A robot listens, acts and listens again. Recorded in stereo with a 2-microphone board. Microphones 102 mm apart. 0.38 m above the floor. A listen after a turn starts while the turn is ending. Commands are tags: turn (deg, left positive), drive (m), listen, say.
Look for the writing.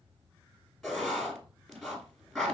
<turn deg="30"/>
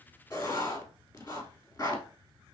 <turn deg="150"/>
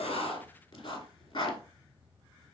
<turn deg="60"/>
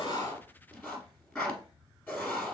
<turn deg="15"/>
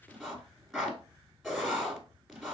<say>Found it: writing, straight ahead, 1 to 2 m away.</say>